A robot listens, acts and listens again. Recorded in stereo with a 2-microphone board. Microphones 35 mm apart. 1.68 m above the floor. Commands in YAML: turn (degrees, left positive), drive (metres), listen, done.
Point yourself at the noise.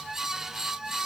listen: true
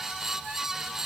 listen: true
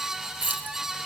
turn: -60
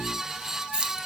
turn: -30
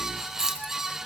turn: -15
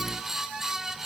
listen: true
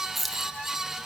done: "Facing the keys jangling, 1 to 2 m away."